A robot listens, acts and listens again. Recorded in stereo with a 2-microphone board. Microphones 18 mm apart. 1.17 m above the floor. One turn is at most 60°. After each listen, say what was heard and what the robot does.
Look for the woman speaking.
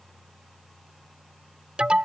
Keep listening.
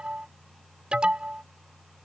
Keep listening.
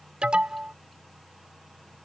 I can't make out a woman speaking, only an alarm.